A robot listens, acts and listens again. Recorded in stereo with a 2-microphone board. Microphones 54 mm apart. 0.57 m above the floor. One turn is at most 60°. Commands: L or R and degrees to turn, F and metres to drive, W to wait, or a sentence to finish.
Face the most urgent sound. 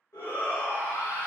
L55
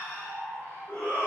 L25
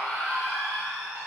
R10
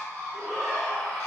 Found it: a shout, straight ahead.